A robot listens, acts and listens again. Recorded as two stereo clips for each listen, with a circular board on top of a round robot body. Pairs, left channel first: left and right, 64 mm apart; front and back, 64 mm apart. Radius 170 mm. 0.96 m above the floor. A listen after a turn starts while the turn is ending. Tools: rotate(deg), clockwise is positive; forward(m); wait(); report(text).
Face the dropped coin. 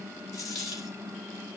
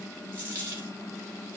rotate(-120)
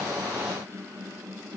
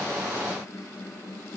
report("Facing where the dropped coin came from. I can't hear it now.")